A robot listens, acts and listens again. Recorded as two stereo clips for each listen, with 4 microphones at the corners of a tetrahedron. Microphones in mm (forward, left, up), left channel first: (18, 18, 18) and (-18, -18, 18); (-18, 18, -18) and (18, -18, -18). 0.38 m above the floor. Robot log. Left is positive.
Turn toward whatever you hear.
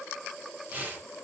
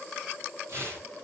note: The tearing paper: 80° right.
cmd yaw -80
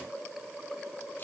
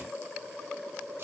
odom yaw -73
cmd idle
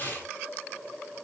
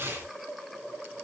end: Facing the tearing paper.